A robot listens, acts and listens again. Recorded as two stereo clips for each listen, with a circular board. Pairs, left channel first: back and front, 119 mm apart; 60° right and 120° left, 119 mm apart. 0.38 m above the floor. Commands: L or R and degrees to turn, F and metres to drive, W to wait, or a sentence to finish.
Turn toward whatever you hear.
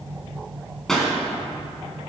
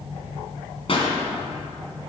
R95
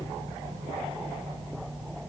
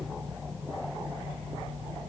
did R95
I heard a pop from this way, but can't make it out now.